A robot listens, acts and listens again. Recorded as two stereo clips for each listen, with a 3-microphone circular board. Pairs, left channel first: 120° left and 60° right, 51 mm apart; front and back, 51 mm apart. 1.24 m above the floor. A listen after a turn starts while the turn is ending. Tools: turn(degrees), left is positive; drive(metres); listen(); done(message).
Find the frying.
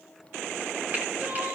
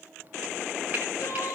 listen()
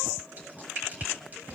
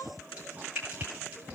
turn(degrees=-120)
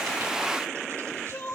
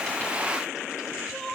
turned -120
listen()
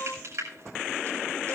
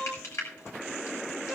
turn(degrees=-30)
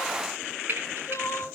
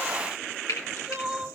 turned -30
done("Facing the frying.")